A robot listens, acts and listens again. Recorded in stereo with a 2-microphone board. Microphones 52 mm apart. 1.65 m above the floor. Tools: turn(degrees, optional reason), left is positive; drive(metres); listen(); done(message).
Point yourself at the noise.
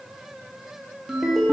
turn(degrees=-30)
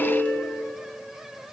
turn(degrees=30, reason="So it is at 30° left.")
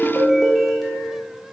done("Facing the ringtone.")